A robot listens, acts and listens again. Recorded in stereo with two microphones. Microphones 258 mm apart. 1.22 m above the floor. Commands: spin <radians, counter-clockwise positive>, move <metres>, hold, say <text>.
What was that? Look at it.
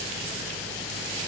hold
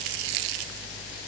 hold
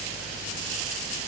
say I can't make out anything.